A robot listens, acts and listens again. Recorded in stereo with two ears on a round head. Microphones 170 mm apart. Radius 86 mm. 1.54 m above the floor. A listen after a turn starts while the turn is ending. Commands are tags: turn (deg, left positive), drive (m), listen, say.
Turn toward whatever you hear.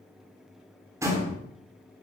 <turn deg="-15"/>
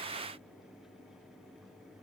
<listen/>
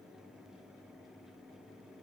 <say>I heard a door slam, but can't make it out now. It was about straight ahead or 150° right.</say>